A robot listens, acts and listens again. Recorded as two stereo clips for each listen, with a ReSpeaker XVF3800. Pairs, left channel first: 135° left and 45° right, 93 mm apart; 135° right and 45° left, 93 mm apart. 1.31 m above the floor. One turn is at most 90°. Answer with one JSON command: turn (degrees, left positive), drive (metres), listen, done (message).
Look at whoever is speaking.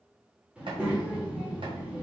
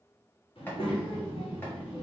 {"turn": -90}
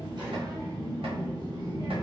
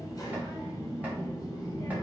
{"turn": -85}
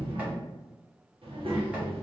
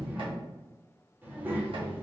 {"turn": -25}
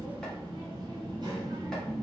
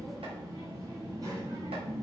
{"done": "Facing the child speaking."}